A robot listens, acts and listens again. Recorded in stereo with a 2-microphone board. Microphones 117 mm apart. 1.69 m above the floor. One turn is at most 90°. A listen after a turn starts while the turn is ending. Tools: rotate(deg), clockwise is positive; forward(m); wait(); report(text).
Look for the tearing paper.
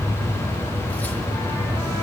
wait()
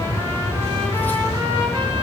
wait()
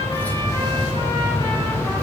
report("I can't make out tearing paper.")